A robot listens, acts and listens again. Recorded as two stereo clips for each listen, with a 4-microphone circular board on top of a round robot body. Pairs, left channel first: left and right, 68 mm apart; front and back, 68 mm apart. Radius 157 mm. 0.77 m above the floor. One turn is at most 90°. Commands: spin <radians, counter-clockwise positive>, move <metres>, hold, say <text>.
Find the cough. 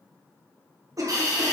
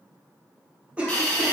spin -1.57
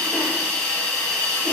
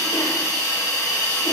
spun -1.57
spin -0.35
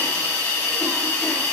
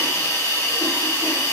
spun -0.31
hold
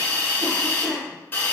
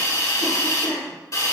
say Facing the cough, 1 to 2 m away.